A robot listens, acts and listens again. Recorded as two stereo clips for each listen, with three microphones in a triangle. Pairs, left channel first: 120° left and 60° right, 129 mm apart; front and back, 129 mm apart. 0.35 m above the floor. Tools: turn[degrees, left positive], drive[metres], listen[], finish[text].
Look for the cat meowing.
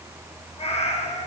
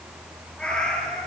Thought: The cat meowing: 85° left.
Action: turn[85]
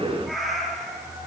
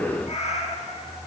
Thought: The cat meowing is now 30° left.
Action: turn[30]
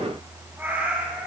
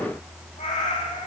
Thought: The cat meowing is now 15° left.
Action: turn[15]
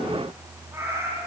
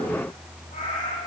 Action: finish[Facing the cat meowing, over 4 m away.]